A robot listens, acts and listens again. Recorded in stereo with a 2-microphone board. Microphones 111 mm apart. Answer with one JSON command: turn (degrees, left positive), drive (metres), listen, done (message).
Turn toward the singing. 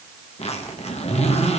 {"listen": true}
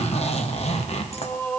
{"turn": 30}
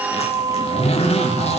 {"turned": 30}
{"turn": -30}
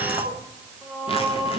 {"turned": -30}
{"turn": -10}
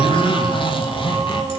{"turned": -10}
{"done": "Found it: singing, straight ahead, 2 to 4 m away."}